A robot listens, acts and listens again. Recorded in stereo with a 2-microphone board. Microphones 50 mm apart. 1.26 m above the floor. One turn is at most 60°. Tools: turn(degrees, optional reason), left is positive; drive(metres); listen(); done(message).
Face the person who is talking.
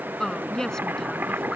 turn(degrees=30)
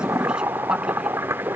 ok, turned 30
listen()
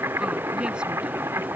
listen()
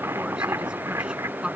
turn(degrees=-15, reason="So it is at 15° right.")
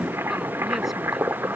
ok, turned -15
listen()
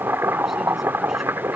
done("Facing the woman speaking.")